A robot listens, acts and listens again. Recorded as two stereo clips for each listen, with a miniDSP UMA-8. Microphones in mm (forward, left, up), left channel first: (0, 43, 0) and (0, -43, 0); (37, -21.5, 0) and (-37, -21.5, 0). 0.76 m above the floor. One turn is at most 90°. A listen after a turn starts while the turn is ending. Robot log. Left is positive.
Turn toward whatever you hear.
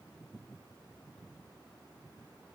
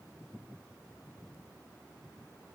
cmd idle
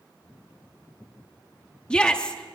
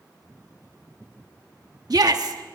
note: The shout: 165° left.
cmd yaw +90
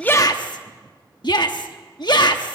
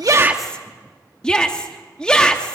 note: The shout is now 80° left.
cmd yaw +80
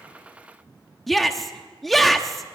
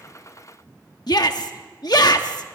end: Found it: a shout, straight ahead.